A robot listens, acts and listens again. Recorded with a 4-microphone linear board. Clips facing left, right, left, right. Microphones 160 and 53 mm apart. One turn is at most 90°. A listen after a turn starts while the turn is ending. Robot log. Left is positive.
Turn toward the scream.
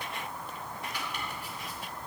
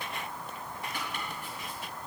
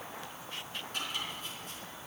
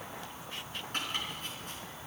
cmd idle
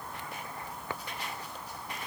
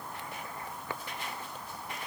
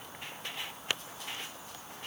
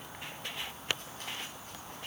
cmd idle
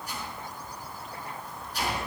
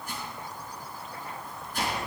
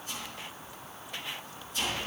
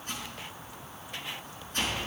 end: I can't make out a scream, only chopping.